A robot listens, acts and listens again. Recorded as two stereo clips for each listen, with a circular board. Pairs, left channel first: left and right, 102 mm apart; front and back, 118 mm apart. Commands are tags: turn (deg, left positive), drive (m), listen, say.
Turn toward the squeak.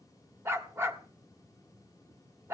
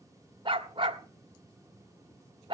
<listen/>
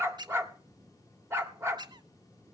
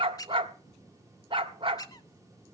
<turn deg="-55"/>
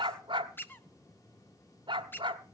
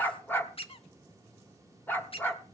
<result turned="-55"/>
<turn deg="25"/>
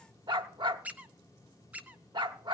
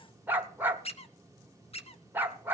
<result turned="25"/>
<turn deg="-15"/>
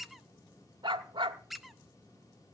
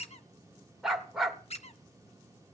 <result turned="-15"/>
<say>Found it: a squeak, straight ahead.</say>